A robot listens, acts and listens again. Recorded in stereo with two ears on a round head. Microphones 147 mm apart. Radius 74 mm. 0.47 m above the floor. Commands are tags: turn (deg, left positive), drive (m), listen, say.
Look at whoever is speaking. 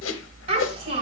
<turn deg="-30"/>
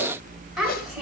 <say>Found it: a child speaking, straight ahead, 2 to 4 m away.</say>